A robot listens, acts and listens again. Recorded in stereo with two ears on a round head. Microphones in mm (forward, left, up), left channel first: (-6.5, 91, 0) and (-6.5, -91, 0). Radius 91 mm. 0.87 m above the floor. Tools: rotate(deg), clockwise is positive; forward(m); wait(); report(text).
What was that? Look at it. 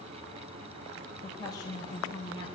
rotate(-25)
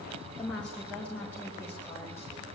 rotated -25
rotate(-30)
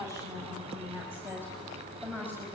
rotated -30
rotate(10)
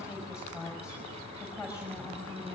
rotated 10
report("Found it: a woman speaking, straight ahead, over 4 m away.")